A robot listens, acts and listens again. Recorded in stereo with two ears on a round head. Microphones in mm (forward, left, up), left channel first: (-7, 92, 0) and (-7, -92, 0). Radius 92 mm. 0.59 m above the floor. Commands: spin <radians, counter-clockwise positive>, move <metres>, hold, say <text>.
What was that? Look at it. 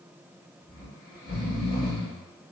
spin 0.35
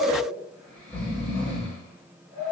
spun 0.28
say Found it: snoring, straight ahead, 1 to 2 m away.